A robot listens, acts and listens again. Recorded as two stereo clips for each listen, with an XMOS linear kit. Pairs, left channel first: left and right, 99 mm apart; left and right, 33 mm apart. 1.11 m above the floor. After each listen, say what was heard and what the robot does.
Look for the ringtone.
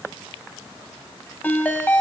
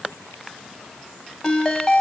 The ringtone: about 20° left or 160° left. Turn 20° left.
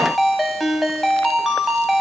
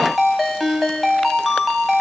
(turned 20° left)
Found it: a ringtone, straight ahead.